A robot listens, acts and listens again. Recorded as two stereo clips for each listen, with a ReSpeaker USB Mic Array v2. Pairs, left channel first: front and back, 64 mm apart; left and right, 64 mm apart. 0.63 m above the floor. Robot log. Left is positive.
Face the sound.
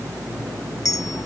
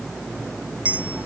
note: The clink: 25° right.
cmd yaw -25
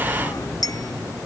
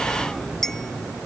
end: Facing the clink.